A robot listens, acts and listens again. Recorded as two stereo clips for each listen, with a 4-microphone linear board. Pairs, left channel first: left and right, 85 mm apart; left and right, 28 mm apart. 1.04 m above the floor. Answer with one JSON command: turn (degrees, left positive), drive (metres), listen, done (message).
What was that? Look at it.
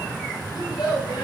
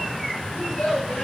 {"turn": 55}
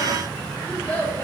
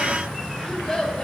{"turn": 15}
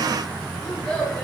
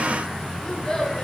{"turn": 10}
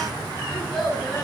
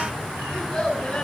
{"done": "Found it: a child speaking, straight ahead."}